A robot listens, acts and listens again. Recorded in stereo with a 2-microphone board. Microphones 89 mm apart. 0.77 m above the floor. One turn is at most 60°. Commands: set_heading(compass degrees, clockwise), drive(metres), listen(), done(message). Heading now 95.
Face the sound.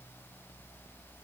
listen()
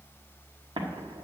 set_heading(155)
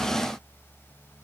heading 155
listen()
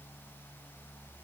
done("I heard an explosion, but can't make it out now. It was about 5° right or 55° right.")